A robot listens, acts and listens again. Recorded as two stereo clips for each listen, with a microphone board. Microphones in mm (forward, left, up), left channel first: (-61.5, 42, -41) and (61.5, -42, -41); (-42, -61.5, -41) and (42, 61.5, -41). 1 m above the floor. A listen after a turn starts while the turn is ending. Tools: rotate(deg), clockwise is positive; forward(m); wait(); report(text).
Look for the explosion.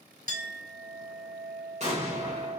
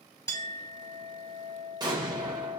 report("Found it: an explosion, straight ahead, 1 to 2 m away.")